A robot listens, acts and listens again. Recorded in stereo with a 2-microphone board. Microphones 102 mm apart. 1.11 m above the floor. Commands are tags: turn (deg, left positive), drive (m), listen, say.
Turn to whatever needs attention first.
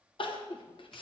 <turn deg="55"/>
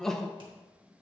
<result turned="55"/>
<say>Found it: crying, straight ahead, under 1 m away.</say>